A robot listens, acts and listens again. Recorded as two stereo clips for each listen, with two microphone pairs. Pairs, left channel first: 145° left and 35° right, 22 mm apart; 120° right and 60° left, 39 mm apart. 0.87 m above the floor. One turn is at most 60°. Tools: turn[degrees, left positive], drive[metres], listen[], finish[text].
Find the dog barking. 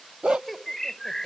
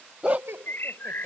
Action: finish[Found it: a dog barking, straight ahead.]